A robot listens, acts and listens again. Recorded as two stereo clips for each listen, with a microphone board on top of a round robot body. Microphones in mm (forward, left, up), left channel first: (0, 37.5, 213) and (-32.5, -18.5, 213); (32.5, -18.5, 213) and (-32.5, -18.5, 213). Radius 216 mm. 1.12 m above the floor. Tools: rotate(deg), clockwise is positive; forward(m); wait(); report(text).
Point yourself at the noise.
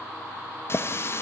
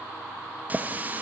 rotate(-110)
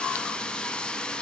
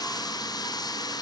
rotate(20)
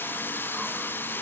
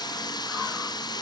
report("Found it: a running tap, straight ahead.")